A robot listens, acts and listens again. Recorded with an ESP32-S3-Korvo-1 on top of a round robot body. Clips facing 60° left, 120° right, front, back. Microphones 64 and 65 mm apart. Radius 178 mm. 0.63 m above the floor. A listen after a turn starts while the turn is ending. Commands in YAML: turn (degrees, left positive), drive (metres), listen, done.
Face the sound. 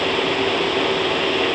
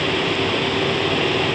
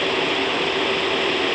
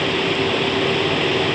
listen: true
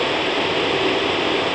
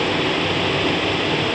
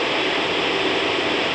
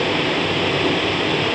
listen: true
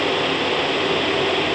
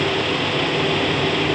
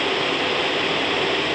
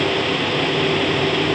done: "I can't make out anything to turn to."